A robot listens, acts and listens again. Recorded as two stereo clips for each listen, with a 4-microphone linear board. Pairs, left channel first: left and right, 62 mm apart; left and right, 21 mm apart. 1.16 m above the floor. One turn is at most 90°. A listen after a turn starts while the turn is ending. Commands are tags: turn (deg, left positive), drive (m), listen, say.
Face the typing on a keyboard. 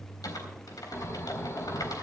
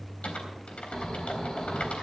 <turn deg="90"/>
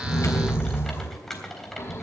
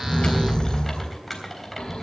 <say>Facing the typing on a keyboard, 2 to 4 m away.</say>